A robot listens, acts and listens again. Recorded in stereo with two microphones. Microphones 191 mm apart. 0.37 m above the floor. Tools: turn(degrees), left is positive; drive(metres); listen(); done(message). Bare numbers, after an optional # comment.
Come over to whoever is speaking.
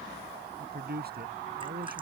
# The man speaking: about 60° right or 120° right.
turn(-60)
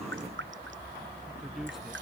listen()
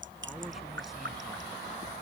listen()
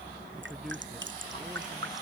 done("I heard a man speaking, but can't make it out now. It was about straight ahead or 60° right. I did not reach it.")